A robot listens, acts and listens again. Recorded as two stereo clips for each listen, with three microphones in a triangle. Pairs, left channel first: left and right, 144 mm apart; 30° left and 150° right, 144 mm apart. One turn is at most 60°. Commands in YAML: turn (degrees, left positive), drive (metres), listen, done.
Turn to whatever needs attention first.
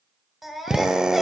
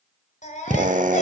done: "Facing the baby crying, 2 to 4 m away."